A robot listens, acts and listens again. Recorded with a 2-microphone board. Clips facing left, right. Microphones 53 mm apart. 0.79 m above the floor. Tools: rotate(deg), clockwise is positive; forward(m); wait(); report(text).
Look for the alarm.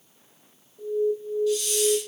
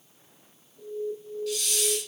rotate(-30)
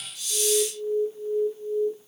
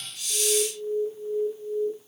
rotate(15)
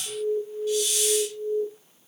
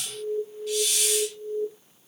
report("Facing the alarm.")